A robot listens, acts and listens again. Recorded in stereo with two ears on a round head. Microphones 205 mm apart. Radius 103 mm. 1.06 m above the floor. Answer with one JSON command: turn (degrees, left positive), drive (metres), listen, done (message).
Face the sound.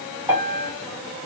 {"turn": -30}
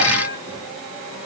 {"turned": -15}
{"turn": -155}
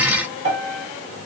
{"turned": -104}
{"turn": -50}
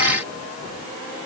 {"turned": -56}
{"listen": true}
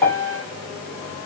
{"done": "Found it: a piano, straight ahead."}